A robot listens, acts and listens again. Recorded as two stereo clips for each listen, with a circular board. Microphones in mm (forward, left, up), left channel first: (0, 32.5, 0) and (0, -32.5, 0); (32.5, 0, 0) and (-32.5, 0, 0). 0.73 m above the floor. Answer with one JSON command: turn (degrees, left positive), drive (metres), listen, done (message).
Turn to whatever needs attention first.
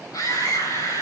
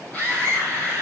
{"turn": 70}
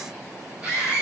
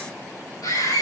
{"turn": -20}
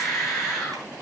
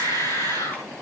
{"done": "Facing the scream, over 4 m away."}